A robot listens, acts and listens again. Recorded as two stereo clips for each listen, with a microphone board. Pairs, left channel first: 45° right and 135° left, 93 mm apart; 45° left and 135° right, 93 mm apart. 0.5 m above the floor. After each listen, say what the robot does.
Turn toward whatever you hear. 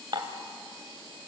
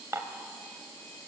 Turn 165° left.
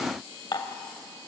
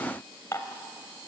Turn 10° right.
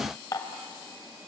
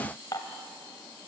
Found it: dishes clattering, straight ahead.